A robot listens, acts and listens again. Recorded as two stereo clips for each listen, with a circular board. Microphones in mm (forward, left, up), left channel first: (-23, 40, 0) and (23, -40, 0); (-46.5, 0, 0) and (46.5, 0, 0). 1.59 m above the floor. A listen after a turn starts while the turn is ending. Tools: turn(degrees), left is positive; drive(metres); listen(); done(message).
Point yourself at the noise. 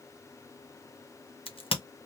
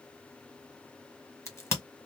turn(degrees=120)
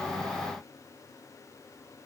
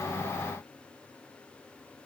done("Facing where the crack came from. I can't hear it now.")